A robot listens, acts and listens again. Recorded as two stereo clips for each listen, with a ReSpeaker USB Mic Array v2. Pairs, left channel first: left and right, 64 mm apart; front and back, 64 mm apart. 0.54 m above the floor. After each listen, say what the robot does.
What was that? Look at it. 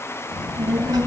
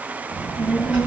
Turn 115° right.
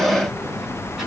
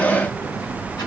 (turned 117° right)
Facing the child speaking, over 4 m away.